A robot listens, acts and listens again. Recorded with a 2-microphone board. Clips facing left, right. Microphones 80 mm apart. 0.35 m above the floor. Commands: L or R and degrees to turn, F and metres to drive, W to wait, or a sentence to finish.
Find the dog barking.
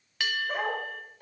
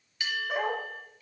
L35
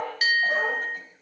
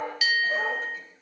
L105
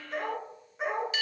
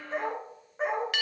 R35
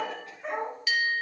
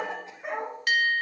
R10
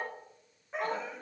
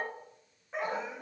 Found it: a dog barking, straight ahead.